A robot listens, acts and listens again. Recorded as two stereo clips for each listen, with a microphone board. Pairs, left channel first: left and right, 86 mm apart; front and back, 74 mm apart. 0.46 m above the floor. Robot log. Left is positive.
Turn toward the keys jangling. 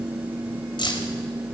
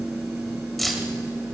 note: The keys jangling: 90° left.
cmd yaw +90
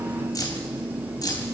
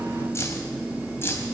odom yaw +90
note: The keys jangling is now 55° left.
cmd yaw +55
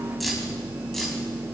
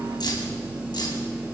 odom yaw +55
end: Facing the keys jangling.